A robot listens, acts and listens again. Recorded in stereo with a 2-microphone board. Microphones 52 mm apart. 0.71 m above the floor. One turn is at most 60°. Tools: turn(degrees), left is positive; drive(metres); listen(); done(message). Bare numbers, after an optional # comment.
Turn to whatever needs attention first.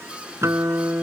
listen()
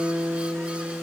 listen()
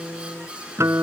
done("I can't make out anything urgent, only a guitar.")